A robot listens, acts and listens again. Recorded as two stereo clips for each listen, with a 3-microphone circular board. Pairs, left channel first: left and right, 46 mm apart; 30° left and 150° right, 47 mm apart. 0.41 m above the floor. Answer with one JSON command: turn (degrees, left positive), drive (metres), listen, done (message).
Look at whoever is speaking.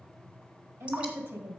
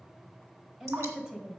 {"turn": -80}
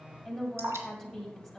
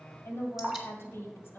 {"done": "Facing the woman speaking."}